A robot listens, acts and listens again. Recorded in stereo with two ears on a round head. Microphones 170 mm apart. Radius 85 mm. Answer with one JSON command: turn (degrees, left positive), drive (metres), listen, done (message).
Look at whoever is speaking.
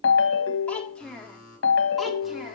{"turn": 30}
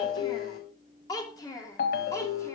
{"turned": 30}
{"turn": 20}
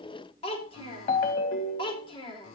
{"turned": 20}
{"turn": 150}
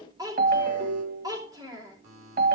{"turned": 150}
{"turn": -20}
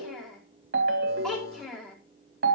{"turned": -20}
{"done": "Found it: a child speaking, straight ahead, over 4 m away."}